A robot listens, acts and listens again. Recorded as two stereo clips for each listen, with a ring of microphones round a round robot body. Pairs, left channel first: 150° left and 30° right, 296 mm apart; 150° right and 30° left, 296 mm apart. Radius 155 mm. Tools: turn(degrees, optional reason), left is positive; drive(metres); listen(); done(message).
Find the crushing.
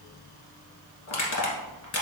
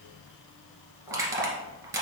turn(degrees=110, reason="The crushing: 110° left.")
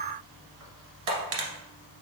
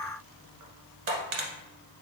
done("Facing the crushing, 1 to 2 m away.")